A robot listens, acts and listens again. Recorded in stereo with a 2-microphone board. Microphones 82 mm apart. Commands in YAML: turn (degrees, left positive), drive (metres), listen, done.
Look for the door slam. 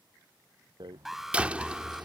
turn: -15
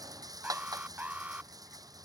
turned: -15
listen: true
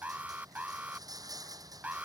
done: "I heard a door slam, but can't make it out now. It was about straight ahead or 150° right."